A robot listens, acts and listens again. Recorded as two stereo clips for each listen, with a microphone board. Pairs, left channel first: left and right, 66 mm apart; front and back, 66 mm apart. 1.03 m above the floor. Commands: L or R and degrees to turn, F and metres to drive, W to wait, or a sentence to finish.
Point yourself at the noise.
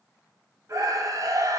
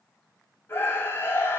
R60
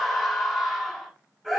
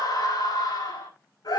Facing the scream, over 4 m away.